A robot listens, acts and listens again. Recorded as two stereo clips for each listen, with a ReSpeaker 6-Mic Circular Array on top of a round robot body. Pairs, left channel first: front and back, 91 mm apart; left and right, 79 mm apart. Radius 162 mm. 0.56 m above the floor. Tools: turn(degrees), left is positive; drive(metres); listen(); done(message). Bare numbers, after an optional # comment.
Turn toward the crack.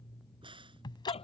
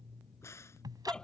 # The crack: 145° left.
turn(145)
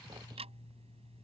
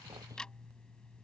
done("I heard a crack from this way, but can't make it out now.")